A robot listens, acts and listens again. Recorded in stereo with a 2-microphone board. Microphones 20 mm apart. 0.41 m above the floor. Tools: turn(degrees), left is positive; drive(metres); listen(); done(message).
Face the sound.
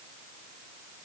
listen()
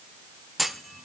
turn(degrees=30)
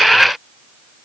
listen()
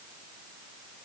done("I heard a clunk, but can't make it out now. It was about 30° right or 150° left.")